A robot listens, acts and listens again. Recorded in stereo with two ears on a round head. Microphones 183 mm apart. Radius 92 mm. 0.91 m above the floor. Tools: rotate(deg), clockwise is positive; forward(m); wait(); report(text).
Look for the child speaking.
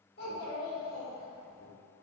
rotate(-40)
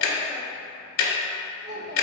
rotate(35)
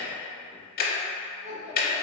rotate(30)
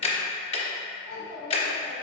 rotate(15)
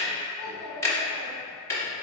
report("Facing the child speaking.")